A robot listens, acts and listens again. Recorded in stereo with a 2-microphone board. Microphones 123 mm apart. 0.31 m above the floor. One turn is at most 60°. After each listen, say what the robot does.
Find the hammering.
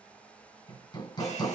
Turn 35° left.
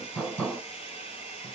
Turn 10° left.
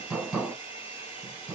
Found it: hammering, straight ahead, 2 to 4 m away.